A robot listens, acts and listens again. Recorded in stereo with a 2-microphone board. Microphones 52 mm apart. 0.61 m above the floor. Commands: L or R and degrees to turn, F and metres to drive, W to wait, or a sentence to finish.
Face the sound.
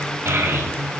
R65
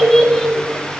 L10
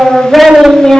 L15
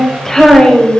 L15
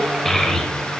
Facing the child speaking, 2 to 4 m away.